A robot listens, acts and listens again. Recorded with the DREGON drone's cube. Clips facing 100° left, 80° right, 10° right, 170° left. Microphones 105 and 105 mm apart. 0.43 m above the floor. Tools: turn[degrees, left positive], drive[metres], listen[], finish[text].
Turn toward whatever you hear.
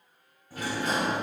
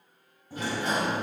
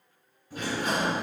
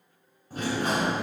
Thought: The sliding door: 145° right.
Action: turn[-145]
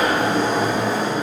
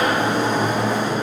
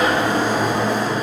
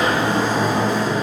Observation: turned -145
Thought: The sliding door is now 50° right.
Action: turn[-50]
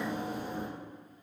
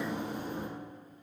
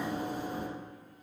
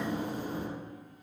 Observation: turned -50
Action: finish[Found it: a sliding door, straight ahead, 1 to 2 m away.]